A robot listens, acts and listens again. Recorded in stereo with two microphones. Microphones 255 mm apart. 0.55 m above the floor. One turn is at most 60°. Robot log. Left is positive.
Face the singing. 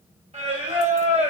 note: The singing: about 25° right or 155° right.
cmd yaw -25
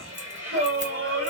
note: So it is at 125° right.
cmd yaw -60
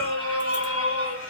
note: The singing is now 60° right.
cmd yaw -60
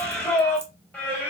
end: Found it: singing, straight ahead.